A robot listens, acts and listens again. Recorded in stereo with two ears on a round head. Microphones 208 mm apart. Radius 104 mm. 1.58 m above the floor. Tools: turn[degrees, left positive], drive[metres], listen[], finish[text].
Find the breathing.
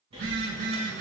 Thought: The breathing: about 25° right or 155° right.
Action: turn[-25]
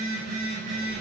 Action: listen[]
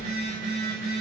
Action: listen[]
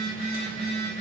Action: finish[I heard breathing, but can't make it out now. It was about straight ahead or 130° right.]